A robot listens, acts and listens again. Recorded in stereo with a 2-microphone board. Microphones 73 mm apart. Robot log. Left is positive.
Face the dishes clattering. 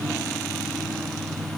cmd idle
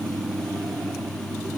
cmd idle
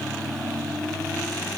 end: I can't make out dishes clattering.